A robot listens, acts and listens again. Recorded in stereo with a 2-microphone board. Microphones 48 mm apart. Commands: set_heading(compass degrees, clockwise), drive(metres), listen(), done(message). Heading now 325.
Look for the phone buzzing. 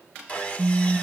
set_heading(255)
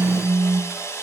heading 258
set_heading(223)
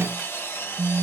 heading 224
done("Found it: a phone buzzing, straight ahead.")